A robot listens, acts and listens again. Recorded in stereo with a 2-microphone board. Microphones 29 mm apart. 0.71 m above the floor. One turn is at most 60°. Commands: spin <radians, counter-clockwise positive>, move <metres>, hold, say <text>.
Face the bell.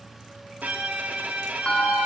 spin 0.61
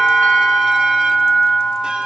spin 1.05
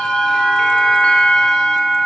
spin 0.79
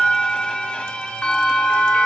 spin 0.70
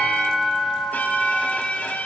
say Found it: a bell, straight ahead.